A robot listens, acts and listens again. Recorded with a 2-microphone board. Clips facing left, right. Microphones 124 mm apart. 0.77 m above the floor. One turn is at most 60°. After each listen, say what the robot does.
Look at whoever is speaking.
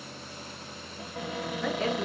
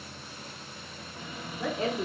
Turn 30° right.
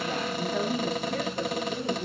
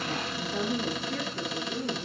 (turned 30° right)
Facing the woman speaking.